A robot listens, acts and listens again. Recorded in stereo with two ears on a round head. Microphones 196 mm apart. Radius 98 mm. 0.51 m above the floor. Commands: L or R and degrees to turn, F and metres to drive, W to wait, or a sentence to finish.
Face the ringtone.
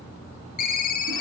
L40
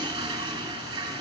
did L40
W
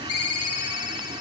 L95
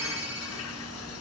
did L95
W
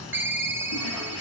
R10
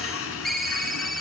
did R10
Facing the ringtone.